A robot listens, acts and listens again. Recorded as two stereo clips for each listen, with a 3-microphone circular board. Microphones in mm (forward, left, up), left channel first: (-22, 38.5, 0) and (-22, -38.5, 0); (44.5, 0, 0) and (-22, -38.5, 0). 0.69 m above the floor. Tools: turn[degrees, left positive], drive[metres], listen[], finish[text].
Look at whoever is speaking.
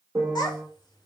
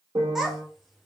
Thought: The child speaking: 125° left.
Action: turn[125]
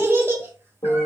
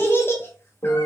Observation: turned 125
Thought: The child speaking is now 30° right.
Action: turn[-30]
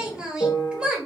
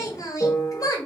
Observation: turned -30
Thought: The child speaking is now 10° right.
Action: turn[-10]
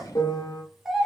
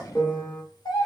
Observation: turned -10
Action: finish[Found it: a child speaking, straight ahead, under 1 m away.]